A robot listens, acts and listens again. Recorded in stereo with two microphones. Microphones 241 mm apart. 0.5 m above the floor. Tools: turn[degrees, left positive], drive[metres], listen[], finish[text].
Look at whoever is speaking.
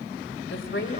Thought: The woman speaking: about 55° left or 125° left.
Action: turn[55]
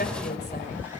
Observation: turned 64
Thought: So it is at 50° left.
Action: turn[50]
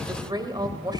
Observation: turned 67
Thought: The woman speaking is now 20° right.
Action: turn[-20]
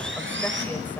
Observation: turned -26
Action: listen[]
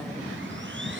Action: listen[]
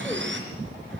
Action: finish[Facing where the woman speaking came from. I can't hear it now.]